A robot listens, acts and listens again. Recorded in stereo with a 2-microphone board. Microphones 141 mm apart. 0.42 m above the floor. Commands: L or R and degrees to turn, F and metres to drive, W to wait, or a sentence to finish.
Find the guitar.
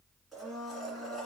W
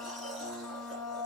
W
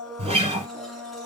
R40
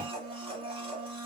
W
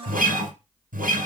R100
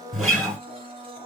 Found it: a guitar, straight ahead.